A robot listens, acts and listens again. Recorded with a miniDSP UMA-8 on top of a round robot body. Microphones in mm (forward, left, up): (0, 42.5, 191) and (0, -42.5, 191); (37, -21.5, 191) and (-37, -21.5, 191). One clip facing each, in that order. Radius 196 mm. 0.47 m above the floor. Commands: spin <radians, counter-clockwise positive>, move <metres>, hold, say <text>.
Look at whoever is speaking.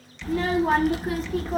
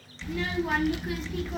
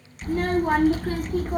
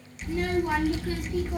spin 0.70
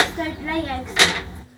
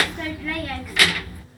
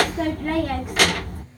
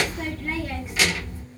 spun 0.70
spin 0.44
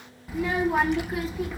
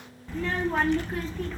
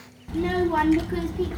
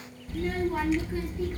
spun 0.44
spin 0.17
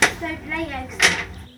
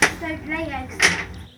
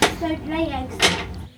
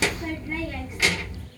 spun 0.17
say Facing the child speaking, under 1 m away.